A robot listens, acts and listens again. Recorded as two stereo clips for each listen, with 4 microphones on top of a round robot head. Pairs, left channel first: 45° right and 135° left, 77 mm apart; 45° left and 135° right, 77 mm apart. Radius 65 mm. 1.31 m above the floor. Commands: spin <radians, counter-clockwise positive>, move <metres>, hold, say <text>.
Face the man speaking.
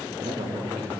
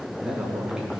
spin 2.53
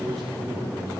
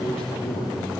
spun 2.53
spin 0.79
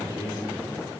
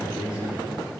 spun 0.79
say Found it: a man speaking, straight ahead.